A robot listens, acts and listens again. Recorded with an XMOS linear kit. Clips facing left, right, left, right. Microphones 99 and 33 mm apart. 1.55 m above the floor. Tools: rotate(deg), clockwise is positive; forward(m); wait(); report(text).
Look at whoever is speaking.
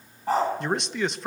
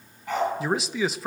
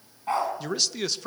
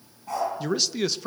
rotate(30)
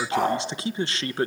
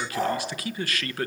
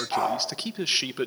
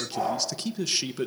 rotate(-30)
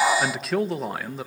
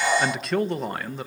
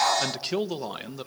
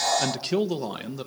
report("Facing the man speaking, 1 to 2 m away.")